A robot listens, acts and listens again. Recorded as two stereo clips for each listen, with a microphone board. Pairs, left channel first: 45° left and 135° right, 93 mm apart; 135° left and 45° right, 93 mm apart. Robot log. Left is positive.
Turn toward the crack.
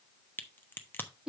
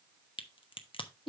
note: The crack: 115° left.
cmd yaw +115
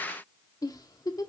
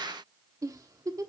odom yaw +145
note: Nothing new. It was at 30° right.
cmd yaw -30
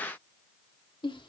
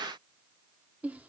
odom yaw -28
end: I heard a crack from this way, but can't make it out now.